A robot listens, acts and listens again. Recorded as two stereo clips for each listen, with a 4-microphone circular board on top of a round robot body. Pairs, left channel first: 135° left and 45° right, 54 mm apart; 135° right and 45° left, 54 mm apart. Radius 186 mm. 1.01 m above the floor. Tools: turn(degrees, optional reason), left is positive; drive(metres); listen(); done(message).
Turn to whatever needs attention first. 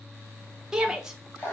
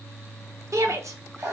turn(degrees=30, reason="The shout: 30° left.")
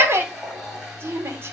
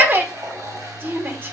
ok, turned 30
done("Found it: a shout, straight ahead, 1 to 2 m away.")